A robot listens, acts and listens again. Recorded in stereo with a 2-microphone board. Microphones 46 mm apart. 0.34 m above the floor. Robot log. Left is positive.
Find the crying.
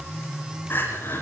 note: The crying: about 45° left or 135° left.
cmd yaw +45
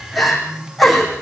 end: Facing the crying, over 4 m away.